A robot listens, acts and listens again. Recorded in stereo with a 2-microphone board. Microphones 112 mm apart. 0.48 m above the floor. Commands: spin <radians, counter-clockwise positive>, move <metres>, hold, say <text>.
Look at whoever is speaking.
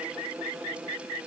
hold
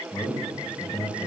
spin 0.52
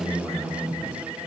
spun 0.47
say Found it: a man speaking, straight ahead, 1 to 2 m away.